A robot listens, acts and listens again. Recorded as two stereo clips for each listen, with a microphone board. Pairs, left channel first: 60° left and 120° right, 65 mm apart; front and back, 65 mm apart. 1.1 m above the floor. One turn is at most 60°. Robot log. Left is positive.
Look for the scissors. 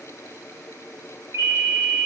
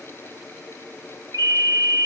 cmd idle
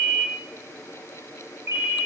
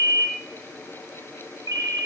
cmd idle
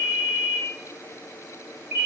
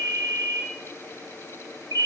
end: I can't make out scissors to turn to.